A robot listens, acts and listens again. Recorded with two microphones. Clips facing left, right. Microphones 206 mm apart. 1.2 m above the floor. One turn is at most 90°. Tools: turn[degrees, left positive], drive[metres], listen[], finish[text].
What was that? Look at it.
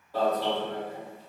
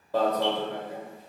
Action: turn[-90]
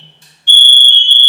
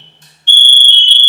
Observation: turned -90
Thought: So it is at 10° left.
Action: turn[10]
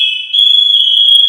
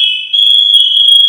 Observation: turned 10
Action: finish[Found it: an alarm, straight ahead.]